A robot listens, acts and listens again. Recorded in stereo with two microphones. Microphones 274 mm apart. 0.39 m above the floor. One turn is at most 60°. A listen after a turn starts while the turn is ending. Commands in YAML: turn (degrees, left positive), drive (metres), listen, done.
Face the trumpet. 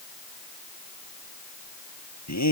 listen: true
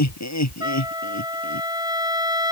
turn: -30
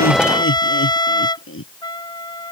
turn: 15
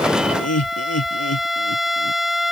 done: "Facing the trumpet."